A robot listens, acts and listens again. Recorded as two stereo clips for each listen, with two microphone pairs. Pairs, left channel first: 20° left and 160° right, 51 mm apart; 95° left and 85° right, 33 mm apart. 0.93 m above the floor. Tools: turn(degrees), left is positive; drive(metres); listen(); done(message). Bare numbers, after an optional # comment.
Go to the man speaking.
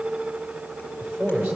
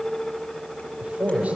# The man speaking: 120° right.
turn(-120)
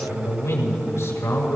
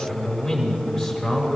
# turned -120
# The man speaking is now 10° left.
turn(10)
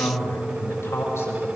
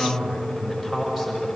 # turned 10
drive(1.0)
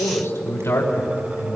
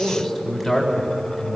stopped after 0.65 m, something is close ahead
done("Something is in my way. I am facing the man speaking but have not reached it.")